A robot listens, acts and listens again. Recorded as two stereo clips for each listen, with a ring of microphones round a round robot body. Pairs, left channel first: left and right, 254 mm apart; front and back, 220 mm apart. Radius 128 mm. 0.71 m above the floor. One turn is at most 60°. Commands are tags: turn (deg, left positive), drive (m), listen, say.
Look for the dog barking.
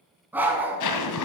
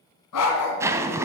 <say>Facing the dog barking.</say>